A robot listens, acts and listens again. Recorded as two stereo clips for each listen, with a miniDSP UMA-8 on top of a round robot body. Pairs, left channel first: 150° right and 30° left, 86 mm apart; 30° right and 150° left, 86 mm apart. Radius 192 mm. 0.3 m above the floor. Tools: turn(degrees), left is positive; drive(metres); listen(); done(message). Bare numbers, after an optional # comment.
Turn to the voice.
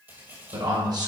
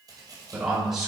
# The man speaking: 65° left.
turn(65)
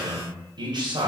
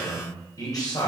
done("Facing the man speaking, 2 to 4 m away.")